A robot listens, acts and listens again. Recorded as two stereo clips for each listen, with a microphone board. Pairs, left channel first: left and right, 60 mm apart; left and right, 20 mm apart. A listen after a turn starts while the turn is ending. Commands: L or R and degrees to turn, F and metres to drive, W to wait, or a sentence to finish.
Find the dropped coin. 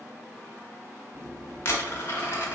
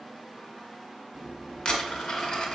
L40
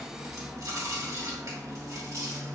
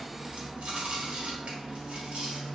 W
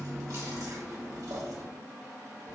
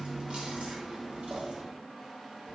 I heard a dropped coin, but can't make it out now. It was about straight ahead or 100° left.